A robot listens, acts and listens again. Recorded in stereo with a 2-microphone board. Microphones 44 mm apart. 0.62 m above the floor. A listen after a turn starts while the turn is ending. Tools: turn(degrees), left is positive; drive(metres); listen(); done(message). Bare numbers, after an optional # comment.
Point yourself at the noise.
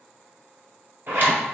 # The zipper: about 50° right or 130° right.
turn(-50)
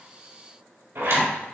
# So it is at 85° right.
turn(-85)
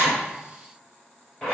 # The zipper is now 15° left.
turn(15)
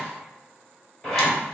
done("Facing the zipper.")